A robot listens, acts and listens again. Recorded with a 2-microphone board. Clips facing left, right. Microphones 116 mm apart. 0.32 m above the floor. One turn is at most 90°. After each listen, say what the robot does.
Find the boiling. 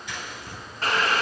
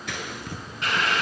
Turn 40° left.
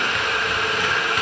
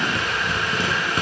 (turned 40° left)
Turn 90° left.
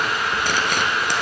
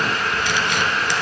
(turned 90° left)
Turn 20° left.
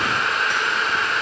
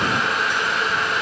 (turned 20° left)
Facing the boiling.